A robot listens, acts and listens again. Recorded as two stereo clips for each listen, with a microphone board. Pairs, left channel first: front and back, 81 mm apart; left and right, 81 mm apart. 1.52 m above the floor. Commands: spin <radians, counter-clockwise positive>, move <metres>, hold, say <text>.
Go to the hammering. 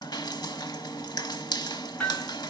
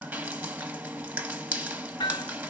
spin 1.48
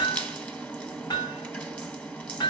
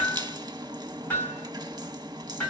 spin 0.52
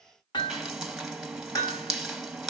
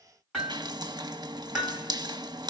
move 1.0
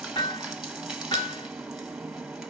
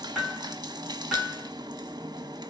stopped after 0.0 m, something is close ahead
say Blocked. The hammering is further on, straight ahead.